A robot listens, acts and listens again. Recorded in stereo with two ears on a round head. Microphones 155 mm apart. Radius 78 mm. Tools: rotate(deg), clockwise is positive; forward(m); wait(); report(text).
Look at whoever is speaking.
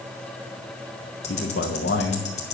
rotate(-90)
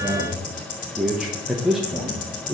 report("Found it: a man speaking, straight ahead.")